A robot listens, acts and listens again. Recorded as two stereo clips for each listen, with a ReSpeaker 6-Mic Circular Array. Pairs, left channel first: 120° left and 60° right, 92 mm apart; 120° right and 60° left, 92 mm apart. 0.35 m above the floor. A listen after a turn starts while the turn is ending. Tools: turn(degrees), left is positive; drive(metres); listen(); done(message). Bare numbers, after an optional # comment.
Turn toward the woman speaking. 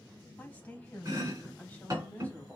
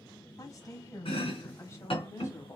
# The woman speaking: 170° right.
turn(-170)
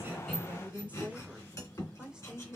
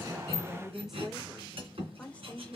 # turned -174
# The woman speaking is now 130° right.
turn(-130)
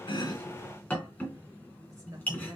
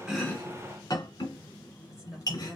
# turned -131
# The woman speaking is now 25° right.
turn(-25)
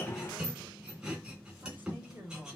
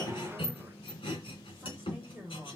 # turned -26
done("Facing the woman speaking, 1 to 2 m away.")